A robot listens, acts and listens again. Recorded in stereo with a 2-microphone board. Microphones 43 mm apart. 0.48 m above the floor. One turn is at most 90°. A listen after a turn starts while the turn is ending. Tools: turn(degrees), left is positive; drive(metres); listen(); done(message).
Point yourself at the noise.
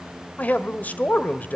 turn(degrees=35)
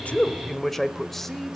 done("Facing the man speaking.")